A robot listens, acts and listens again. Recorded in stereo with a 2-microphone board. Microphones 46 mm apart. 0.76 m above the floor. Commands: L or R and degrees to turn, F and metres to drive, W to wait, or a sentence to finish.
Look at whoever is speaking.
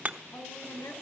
L90
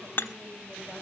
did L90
W
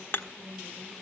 L15
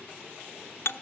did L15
W
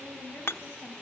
L10
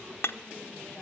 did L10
W
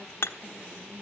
W
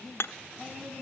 Found it: a woman speaking, straight ahead.